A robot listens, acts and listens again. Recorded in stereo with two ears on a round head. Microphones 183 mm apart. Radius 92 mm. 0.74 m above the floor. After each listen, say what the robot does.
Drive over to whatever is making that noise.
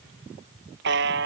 Turn 55° right.
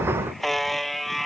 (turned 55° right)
Drive 1.0 m forward.
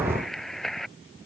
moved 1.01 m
Drive 1.0 m forward.
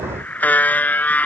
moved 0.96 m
Turn 10° left.
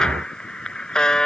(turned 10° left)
Drive 1.0 m forward.
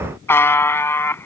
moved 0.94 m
Turn 10° left.
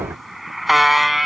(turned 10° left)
Drive 1.0 m forward.
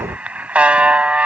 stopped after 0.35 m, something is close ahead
I am next to the buzzer.